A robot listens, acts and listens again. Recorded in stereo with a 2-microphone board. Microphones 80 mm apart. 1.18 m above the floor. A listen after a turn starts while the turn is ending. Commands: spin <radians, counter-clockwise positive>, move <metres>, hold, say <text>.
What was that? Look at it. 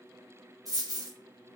spin -0.87
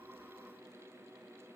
hold
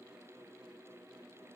say I heard a dropped coin, but can't make it out now. It was about straight ahead or 80° right.